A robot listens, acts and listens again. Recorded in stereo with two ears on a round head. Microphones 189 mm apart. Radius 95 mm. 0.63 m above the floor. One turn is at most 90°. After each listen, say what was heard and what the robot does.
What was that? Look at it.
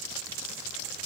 Keep listening.
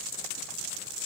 Keep listening.
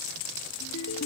Turn 90° left.
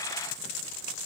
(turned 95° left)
Keep listening.
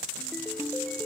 Found it: a ringtone, straight ahead.